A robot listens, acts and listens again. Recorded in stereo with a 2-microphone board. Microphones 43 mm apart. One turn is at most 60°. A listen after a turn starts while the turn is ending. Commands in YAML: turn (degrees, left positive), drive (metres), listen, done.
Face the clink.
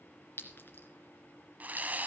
turn: 55
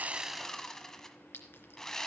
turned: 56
turn: 60
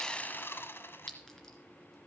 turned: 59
turn: 10
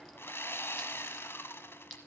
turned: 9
done: "Found it: a clink, straight ahead."